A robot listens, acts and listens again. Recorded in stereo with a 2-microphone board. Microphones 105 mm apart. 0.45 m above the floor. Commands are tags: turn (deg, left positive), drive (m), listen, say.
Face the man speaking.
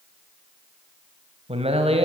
<turn deg="-70"/>
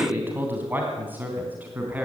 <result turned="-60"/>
<turn deg="-15"/>
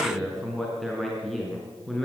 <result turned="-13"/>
<say>Found it: a man speaking, straight ahead, over 4 m away.</say>